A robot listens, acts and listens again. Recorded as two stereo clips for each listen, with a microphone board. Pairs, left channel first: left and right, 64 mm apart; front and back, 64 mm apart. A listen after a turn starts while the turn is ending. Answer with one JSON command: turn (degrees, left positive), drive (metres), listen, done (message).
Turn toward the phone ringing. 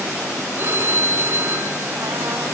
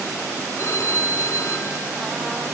{"turn": -40}
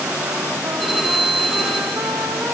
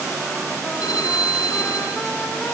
{"done": "Found it: a phone ringing, straight ahead, over 4 m away."}